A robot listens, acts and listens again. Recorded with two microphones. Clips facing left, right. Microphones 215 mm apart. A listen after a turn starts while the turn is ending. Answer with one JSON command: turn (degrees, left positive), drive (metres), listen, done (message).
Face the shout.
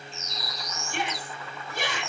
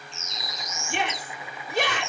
{"turn": -70}
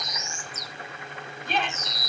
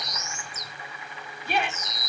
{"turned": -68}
{"turn": -10}
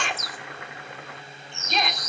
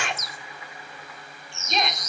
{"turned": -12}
{"done": "Found it: a shout, straight ahead, 2 to 4 m away."}